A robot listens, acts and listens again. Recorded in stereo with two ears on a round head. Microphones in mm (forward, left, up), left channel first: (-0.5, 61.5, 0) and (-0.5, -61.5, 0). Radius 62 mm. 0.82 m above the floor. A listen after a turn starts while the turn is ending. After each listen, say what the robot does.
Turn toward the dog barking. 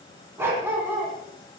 Turn 30° right.
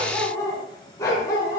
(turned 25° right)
Turn 25° left.
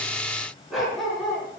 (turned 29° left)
Found it: a dog barking, straight ahead, over 4 m away.